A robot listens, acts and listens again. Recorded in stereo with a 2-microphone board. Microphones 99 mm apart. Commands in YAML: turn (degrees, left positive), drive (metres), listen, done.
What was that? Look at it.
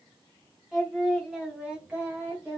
turn: -15
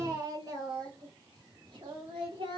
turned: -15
turn: -125
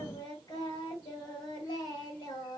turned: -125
turn: 45
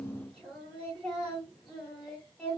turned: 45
done: "Facing the singing, 2 to 4 m away."